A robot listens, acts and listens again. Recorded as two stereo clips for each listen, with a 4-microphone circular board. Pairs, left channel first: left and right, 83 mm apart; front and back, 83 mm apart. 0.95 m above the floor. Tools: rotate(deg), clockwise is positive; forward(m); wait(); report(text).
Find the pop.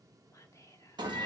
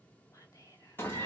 wait()
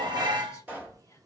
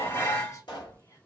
rotate(20)
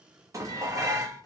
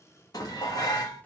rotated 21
report("Facing where the pop came from. I can't hear it now.")